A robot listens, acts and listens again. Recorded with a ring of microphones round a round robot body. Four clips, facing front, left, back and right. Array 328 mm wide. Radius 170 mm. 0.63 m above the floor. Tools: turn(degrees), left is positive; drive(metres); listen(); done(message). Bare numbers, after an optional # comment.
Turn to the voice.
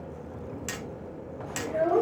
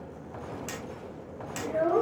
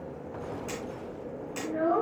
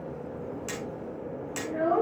# The child speaking: 45° left.
turn(45)
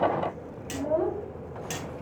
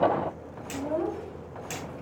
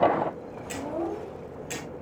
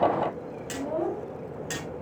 # The child speaking is now 15° left.
turn(15)
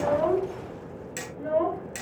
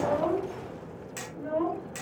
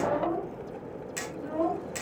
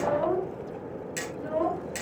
done("Facing the child speaking, 2 to 4 m away.")